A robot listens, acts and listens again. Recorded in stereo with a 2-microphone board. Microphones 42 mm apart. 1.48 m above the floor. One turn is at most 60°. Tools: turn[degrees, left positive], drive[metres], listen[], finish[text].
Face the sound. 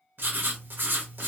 Thought: The writing: about 60° right or 120° right.
Action: turn[-60]
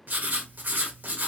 Thought: So it is at 50° right.
Action: turn[-50]
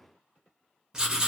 Thought: The writing is now 15° right.
Action: turn[-15]
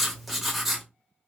Action: finish[Facing the writing.]